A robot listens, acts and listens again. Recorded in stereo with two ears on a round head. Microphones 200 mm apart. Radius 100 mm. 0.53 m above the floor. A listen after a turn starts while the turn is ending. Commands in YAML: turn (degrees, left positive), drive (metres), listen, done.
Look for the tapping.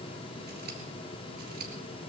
listen: true
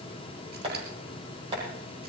turn: -30
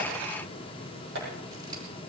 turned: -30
turn: -125
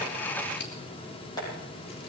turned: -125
turn: 20
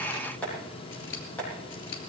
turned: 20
turn: 10
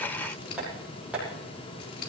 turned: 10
done: "Found it: tapping, straight ahead, over 4 m away."